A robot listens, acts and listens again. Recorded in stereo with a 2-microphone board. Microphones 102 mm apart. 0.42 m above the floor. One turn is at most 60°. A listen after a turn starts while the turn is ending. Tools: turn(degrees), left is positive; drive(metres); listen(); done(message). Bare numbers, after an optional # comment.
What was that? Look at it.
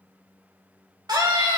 # The scream: about 40° right or 140° right.
turn(-40)
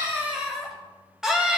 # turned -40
done("Found it: a scream, straight ahead.")